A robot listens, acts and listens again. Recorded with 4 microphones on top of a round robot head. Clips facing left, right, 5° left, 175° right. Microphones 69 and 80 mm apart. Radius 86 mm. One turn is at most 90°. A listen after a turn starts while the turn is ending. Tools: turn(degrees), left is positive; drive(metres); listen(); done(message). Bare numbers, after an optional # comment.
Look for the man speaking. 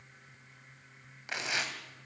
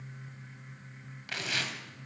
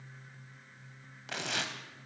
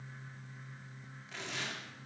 listen()
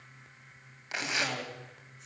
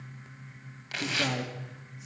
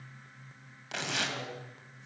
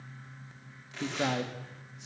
# The man speaking: 170° right.
turn(-90)
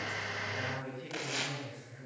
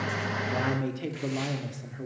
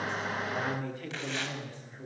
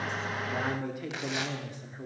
# The man speaking is now 100° right.
turn(-90)
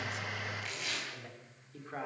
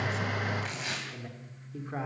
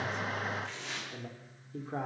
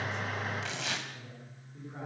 # The man speaking is now 10° right.
turn(-10)
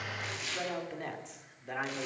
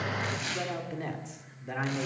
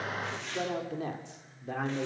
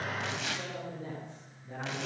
done("Found it: a man speaking, straight ahead.")